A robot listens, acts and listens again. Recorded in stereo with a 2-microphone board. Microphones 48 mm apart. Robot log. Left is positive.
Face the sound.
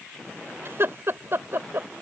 note: The laughter: about 50° right or 130° right.
cmd yaw -50
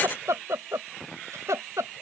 note: So it is at 80° right.
cmd yaw -80
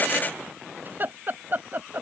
note: The laughter is now 45° right.
cmd yaw -45
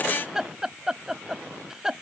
note: The laughter is now 15° right.
cmd yaw -15
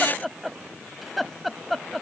end: Found it: laughter, straight ahead.